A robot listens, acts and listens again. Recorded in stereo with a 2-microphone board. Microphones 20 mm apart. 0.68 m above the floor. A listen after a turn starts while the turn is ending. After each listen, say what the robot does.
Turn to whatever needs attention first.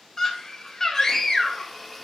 Turn 25° left.
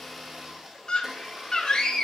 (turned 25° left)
Turn 125° left.
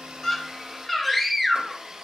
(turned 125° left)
Found it: a scream, straight ahead, 2 to 4 m away.